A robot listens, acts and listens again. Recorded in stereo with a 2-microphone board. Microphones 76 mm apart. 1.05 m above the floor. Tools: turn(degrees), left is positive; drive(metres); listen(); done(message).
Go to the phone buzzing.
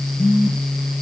turn(degrees=30)
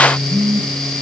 drive(metres=1.0)
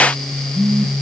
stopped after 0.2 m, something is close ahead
turn(degrees=10)
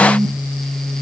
done("Something is in my way. I am facing the phone buzzing but have not reached it.")